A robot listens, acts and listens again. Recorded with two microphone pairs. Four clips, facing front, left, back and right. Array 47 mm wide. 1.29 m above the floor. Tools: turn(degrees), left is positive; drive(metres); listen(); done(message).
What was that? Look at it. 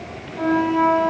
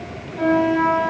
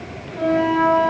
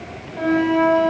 turn(degrees=-125)
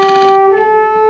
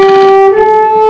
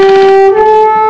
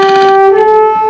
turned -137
turn(degrees=15)
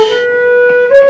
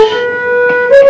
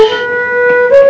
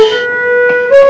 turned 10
done("Facing the flute, 1 to 2 m away.")